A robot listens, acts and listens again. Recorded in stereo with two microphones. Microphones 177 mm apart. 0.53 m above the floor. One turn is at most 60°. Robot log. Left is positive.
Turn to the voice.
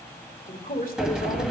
note: The man speaking: about 55° left or 125° left.
cmd yaw +55
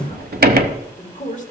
note: So it is at 55° left.
cmd yaw +55
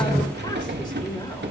cmd idle
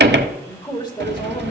note: The man speaking is now 25° left.
cmd yaw +25
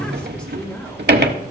end: Facing the man speaking.